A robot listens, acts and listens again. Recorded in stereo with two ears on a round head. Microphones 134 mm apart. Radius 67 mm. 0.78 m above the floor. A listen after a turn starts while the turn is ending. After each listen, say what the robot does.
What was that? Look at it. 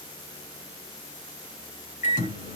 Turn 50° left.
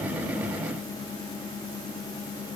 Found it: a microwave, straight ahead.